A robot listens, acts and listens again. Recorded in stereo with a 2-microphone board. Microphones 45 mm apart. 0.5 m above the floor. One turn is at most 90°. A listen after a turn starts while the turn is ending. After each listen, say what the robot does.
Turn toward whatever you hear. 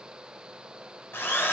Turn 60° left.
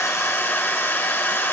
Turn 55° left.
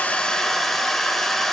Facing the drill.